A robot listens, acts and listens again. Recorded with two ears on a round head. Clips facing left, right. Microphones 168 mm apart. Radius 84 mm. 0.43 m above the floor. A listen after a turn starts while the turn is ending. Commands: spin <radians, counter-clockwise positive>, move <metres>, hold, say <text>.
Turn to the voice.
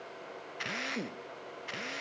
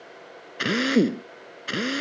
hold
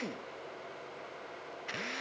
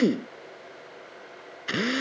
hold
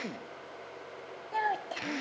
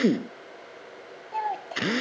spin 0.52
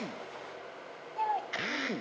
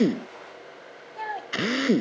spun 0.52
spin -0.35
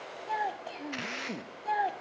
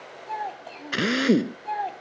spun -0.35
say Found it: a child speaking, straight ahead.